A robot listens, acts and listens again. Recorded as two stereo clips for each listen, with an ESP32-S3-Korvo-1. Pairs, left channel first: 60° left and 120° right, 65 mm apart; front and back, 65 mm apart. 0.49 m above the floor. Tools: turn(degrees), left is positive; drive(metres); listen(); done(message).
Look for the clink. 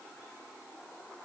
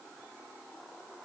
listen()
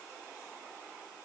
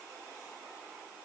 listen()
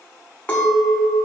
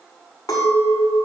turn(degrees=-10)
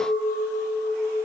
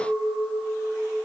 done("Facing the clink, 2 to 4 m away.")